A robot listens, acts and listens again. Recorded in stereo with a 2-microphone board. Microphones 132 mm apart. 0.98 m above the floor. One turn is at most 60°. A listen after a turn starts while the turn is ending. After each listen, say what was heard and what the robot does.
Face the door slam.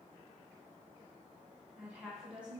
Keep listening.
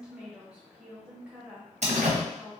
The door slam: about 60° right or 120° right. Turn 60° right.
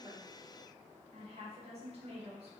Keep listening.
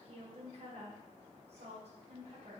I heard a door slam, but can't make it out now. It was about straight ahead or 60° right.